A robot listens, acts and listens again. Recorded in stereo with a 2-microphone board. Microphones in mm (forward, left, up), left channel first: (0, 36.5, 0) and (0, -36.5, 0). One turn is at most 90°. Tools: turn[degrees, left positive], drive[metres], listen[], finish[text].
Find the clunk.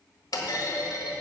Thought: The clunk: about 65° left or 115° left.
Action: turn[65]
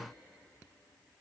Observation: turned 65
Action: listen[]
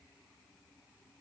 Action: finish[I heard a clunk, but can't make it out now. It was about straight ahead or 50° left.]